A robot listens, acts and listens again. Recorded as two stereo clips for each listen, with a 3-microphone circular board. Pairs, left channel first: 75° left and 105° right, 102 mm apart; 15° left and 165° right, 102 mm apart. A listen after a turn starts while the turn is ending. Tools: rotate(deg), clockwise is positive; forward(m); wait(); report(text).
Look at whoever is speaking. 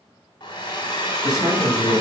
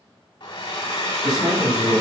rotate(135)
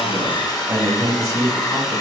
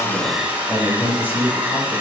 rotate(55)
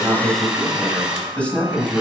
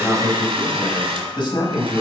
report("Facing the man speaking.")